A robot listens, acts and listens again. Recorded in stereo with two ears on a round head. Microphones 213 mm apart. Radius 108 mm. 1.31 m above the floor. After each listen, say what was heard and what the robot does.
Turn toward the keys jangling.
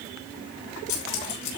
Turn 90° left.
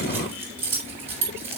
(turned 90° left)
So it is at 10° right. Turn 10° right.
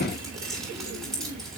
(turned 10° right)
Found it: keys jangling, straight ahead, over 4 m away.